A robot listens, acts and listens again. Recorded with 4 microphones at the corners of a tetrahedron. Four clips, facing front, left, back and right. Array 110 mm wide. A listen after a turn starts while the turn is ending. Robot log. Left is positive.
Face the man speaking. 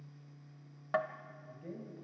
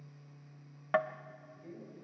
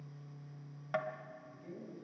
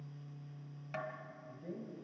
note: The man speaking: 40° right.
cmd yaw -40
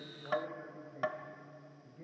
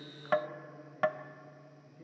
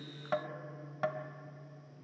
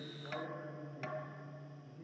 cmd idle
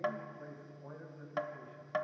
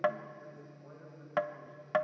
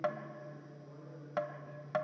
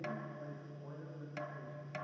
cmd idle
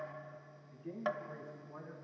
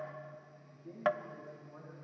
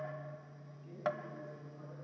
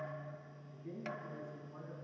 end: Facing the man speaking, over 4 m away.